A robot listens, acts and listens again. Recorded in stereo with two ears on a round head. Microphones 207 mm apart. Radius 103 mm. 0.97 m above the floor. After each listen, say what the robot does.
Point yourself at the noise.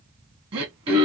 Turn 20° right.
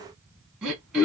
Facing the throat clearing, 1 to 2 m away.